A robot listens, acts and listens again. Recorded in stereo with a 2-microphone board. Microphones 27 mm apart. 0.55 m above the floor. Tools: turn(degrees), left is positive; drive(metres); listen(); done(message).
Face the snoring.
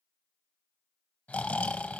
turn(degrees=60)
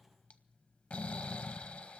turn(degrees=60)
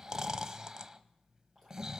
turn(degrees=-25)
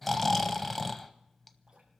turn(degrees=10)
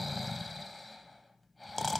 done("Found it: snoring, straight ahead.")